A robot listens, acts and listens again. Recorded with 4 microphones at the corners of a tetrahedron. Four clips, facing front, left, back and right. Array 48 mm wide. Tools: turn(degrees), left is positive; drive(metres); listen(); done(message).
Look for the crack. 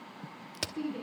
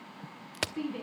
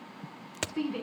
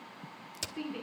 turn(degrees=110)
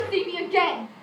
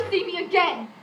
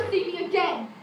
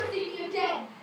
done("Facing where the crack came from. I can't hear it now.")